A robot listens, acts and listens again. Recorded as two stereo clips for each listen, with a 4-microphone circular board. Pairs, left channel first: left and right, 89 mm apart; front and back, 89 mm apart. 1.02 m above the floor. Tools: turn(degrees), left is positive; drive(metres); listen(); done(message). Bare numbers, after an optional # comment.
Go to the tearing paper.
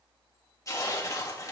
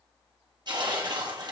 # The tearing paper: 145° left.
turn(145)
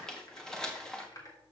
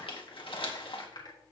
drive(1.0)
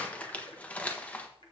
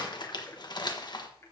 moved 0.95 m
# The tearing paper is now 20° left.
turn(20)
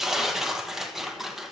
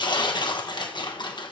drive(1.0)
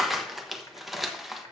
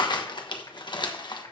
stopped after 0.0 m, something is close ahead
done("I am next to the tearing paper.")